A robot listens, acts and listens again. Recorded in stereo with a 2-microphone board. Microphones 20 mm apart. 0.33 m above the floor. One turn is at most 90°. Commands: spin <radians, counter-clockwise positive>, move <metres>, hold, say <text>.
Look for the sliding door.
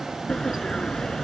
spin 0.96
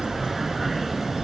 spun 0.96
say Facing the sliding door.